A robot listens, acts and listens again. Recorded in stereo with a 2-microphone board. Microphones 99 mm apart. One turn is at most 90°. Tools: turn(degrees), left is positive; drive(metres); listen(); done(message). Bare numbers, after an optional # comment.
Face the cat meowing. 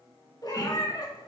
# The cat meowing: about 45° left or 135° left.
turn(45)
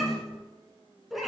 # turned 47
done("Found it: a cat meowing, straight ahead.")